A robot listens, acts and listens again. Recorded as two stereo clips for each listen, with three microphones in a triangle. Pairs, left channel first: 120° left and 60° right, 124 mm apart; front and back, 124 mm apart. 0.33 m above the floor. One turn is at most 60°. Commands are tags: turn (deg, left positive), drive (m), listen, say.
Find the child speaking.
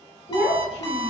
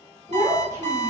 <turn deg="60"/>
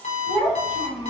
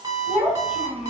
<turn deg="60"/>
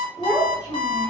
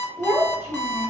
<turn deg="60"/>
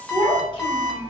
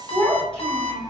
<turn deg="60"/>
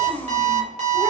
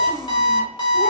<turn deg="35"/>
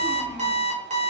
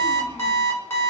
<listen/>
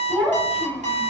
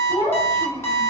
<turn deg="20"/>
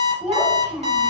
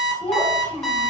<say>Facing the child speaking, 1 to 2 m away.</say>